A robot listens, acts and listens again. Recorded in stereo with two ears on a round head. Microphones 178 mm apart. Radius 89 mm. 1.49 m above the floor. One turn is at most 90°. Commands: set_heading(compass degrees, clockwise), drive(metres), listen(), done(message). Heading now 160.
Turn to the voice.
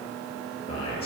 set_heading(130)
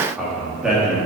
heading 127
done("Found it: a man speaking, straight ahead, over 4 m away.")